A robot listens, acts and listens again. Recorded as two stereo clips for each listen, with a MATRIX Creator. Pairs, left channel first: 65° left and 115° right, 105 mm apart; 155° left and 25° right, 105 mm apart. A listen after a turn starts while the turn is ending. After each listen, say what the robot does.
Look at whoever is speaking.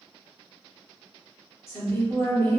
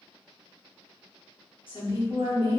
Turn 130° left.
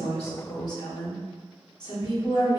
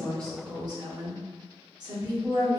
Turn 25° left.
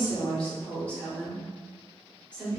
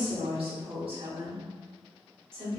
Turn 10° right.
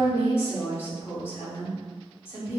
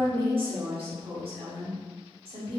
Facing the woman speaking, 1 to 2 m away.